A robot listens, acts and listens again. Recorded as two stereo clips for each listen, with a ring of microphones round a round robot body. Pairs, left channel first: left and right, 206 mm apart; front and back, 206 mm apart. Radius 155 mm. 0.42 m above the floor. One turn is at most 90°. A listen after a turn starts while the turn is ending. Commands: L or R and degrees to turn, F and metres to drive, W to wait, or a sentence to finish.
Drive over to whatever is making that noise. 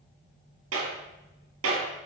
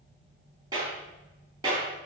R90
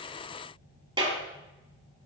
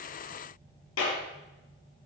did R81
R25
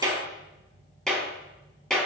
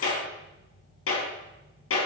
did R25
F1.0
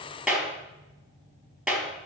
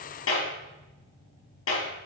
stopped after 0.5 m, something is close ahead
Blocked. The clap is further on, straight ahead.